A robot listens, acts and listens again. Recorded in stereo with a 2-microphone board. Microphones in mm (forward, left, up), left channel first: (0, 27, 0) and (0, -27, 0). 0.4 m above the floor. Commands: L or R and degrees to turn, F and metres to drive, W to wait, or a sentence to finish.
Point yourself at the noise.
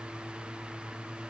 W
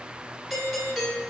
L30
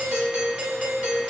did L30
R30
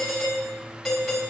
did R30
Facing the doorbell, 2 to 4 m away.